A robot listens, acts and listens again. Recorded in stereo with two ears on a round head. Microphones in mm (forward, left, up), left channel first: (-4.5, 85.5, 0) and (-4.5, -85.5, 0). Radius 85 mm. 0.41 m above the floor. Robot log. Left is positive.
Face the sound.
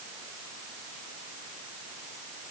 cmd idle
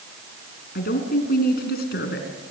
note: The woman speaking: about 55° left or 125° left.
cmd yaw +55
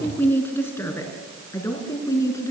note: So it is at 15° left.
cmd yaw +15
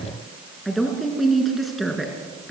end: Facing the woman speaking, over 4 m away.